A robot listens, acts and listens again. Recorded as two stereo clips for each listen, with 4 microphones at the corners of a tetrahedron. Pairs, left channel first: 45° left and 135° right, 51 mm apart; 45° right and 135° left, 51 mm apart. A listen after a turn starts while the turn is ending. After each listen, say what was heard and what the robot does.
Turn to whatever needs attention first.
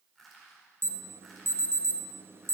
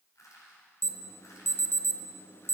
The alarm: 90° right. Turn 90° right.
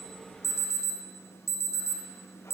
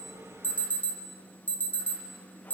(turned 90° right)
The alarm is now 15° left. Turn 15° left.
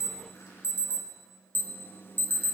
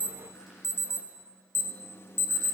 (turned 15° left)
Facing the alarm.